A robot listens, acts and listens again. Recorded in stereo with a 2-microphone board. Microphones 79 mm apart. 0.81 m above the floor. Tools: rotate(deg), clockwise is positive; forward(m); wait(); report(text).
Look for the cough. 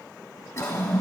rotate(-40)
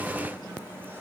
wait()
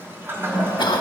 rotate(-100)
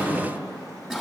report("Found it: a cough, straight ahead, 1 to 2 m away.")